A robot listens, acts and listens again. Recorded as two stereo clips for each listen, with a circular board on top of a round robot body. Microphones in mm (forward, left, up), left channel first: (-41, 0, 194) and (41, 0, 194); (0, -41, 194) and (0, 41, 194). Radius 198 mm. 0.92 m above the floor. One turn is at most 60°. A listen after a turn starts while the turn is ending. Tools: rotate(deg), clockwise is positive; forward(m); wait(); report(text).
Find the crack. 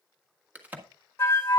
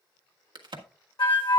rotate(-60)
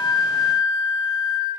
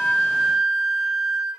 rotate(-10)
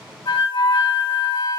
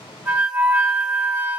report("I heard a crack from this way, but can't make it out now.")